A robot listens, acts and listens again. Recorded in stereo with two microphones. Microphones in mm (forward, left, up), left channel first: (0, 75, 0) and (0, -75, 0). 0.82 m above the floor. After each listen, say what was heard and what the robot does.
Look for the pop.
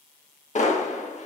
The pop: about 50° left or 130° left. Turn 50° left.
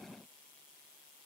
Keep listening.
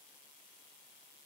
I heard a pop, but can't make it out now. It was about straight ahead or 80° left.